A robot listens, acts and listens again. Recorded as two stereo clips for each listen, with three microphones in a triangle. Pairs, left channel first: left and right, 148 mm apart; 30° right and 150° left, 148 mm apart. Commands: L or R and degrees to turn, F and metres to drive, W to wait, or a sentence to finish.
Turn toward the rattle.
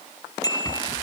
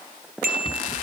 L25
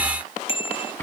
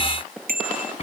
L10
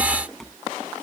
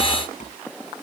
Facing the rattle.